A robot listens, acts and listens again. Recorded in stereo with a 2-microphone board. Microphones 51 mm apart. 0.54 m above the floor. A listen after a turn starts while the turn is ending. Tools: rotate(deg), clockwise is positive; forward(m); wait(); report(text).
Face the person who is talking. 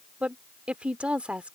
rotate(25)
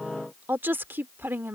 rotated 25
rotate(125)
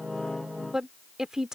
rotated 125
rotate(10)
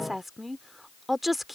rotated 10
report("Found it: a woman speaking, straight ahead.")